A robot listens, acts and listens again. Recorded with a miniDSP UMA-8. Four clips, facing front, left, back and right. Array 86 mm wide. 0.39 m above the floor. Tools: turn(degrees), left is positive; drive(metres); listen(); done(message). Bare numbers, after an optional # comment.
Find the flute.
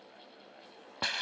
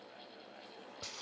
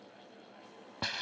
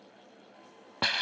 listen()
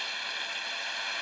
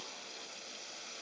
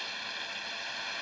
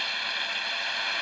listen()
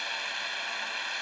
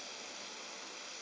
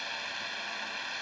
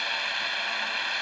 done("I can't make out a flute to turn to.")